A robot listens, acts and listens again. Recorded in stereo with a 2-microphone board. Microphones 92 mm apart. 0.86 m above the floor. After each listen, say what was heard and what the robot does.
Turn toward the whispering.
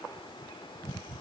Keep listening.
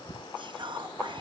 The whispering: about 60° right or 120° right. Turn 60° right.
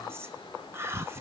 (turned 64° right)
So it is at 30° right. Turn 30° right.
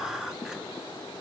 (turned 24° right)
Facing the whispering.